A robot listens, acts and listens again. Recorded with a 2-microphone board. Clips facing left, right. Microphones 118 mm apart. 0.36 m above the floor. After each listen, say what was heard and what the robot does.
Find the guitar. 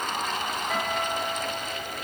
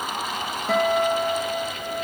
Turn 90° right.
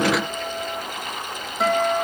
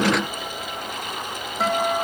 Facing the guitar, 2 to 4 m away.